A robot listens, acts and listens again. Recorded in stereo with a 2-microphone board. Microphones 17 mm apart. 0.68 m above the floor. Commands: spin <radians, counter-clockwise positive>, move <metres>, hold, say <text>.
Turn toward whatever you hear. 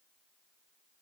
hold
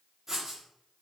spin -0.44
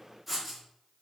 say Found it: writing, straight ahead, 1 to 2 m away.